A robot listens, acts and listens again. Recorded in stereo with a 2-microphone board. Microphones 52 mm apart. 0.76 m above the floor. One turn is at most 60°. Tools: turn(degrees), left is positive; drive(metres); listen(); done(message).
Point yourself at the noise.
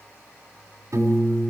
turn(degrees=-60)
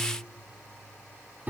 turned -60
turn(degrees=-35)
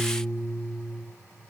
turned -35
turn(degrees=-10)
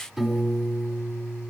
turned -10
done("Found it: a piano, straight ahead.")